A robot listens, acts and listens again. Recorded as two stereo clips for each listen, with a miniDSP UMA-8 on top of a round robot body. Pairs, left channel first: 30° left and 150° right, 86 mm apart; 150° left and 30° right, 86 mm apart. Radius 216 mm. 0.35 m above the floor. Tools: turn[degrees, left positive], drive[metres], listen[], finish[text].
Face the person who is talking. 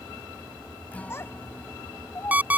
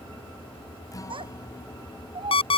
Thought: The child speaking: 30° right.
Action: turn[-30]
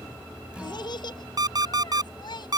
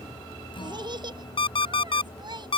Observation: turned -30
Action: finish[Facing the child speaking.]